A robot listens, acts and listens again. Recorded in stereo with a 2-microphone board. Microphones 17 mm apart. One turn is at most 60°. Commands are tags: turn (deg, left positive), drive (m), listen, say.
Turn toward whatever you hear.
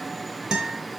<turn deg="-55"/>
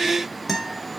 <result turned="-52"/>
<say>Facing the guitar.</say>